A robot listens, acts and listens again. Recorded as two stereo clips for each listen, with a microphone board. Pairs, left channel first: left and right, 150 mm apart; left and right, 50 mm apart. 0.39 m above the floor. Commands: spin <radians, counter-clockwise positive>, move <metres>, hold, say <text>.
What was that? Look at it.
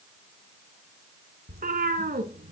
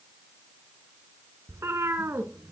spin -1.57
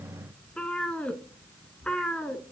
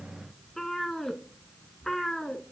say Facing the cat meowing.